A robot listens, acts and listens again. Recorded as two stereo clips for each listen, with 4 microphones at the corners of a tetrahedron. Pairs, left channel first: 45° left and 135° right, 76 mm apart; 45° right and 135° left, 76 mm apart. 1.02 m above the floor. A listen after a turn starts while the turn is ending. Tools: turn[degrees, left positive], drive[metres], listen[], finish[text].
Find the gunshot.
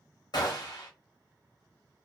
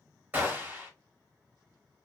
Thought: The gunshot: 70° left.
Action: turn[70]
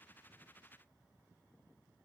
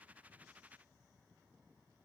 Action: finish[Facing where the gunshot came from. I can't hear it now.]